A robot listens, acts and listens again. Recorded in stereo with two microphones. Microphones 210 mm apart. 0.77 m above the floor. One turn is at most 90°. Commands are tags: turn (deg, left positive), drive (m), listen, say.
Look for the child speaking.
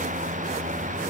<listen/>
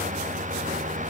<listen/>
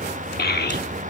<turn deg="45"/>
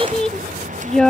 <say>Found it: a child speaking, straight ahead.</say>